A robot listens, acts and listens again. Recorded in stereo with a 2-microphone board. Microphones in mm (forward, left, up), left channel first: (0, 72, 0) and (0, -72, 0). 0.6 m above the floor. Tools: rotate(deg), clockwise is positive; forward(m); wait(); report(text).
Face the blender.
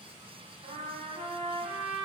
wait()
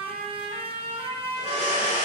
rotate(-50)
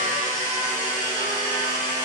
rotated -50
rotate(-75)
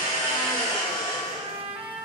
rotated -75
rotate(-30)
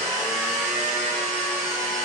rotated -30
report("Found it: a blender, straight ahead, 1 to 2 m away.")